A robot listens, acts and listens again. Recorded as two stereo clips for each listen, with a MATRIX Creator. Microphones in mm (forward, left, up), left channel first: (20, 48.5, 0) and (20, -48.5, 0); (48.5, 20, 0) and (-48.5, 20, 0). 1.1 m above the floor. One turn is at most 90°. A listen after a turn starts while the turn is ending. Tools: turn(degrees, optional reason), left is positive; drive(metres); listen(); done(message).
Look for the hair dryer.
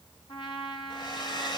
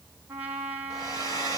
turn(degrees=50, reason="The hair dryer: 50° left.")
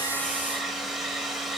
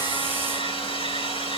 done("Found it: a hair dryer, straight ahead.")